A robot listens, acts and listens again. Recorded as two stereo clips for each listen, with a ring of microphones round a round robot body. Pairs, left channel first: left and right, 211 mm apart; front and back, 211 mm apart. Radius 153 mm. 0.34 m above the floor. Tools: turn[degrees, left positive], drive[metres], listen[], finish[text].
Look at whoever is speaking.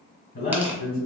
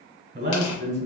Thought: The man speaking: 125° left.
Action: turn[125]
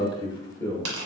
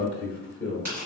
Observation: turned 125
Thought: The man speaking is now 15° left.
Action: turn[15]
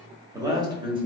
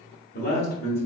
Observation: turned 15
Thought: The man speaking is now 30° right.
Action: turn[-30]
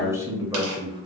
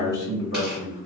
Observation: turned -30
Thought: The man speaking is now 25° right.
Action: turn[-25]
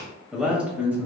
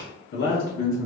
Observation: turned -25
Thought: The man speaking is now 10° right.
Action: turn[-10]
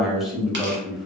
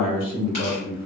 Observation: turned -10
Action: finish[Facing the man speaking.]